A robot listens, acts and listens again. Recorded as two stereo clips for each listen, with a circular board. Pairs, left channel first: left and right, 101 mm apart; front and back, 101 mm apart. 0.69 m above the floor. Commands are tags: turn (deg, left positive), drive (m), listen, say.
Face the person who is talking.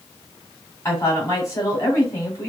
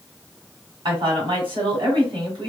<turn deg="150"/>
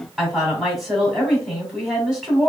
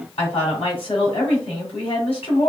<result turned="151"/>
<say>Facing the woman speaking, 2 to 4 m away.</say>